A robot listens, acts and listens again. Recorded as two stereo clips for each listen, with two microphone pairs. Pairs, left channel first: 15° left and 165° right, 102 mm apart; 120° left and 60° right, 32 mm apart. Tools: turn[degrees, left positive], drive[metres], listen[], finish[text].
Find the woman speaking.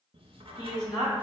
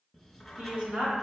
Thought: The woman speaking: 25° right.
Action: turn[-25]
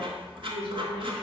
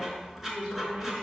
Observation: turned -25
Thought: The woman speaking is now 10° right.
Action: turn[-10]
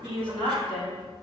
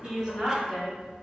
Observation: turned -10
Action: finish[Facing the woman speaking, 1 to 2 m away.]